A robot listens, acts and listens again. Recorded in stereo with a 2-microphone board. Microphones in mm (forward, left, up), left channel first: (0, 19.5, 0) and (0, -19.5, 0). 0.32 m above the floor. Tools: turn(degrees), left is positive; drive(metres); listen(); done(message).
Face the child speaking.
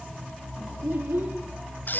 turn(degrees=-70)
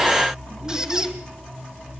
listen()
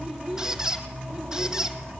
turn(degrees=-25)
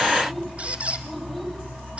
listen()
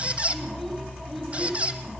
listen()
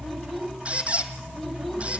done("Found it: a child speaking, straight ahead, over 4 m away.")